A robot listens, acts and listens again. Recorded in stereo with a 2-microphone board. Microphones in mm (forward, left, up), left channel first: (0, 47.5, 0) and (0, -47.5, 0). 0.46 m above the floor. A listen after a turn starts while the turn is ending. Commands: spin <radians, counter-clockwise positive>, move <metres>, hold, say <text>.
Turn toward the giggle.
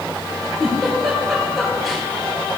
spin 0.52
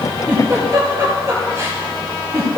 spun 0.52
spin -0.52
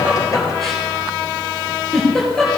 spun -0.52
say Found it: a giggle, straight ahead, over 4 m away.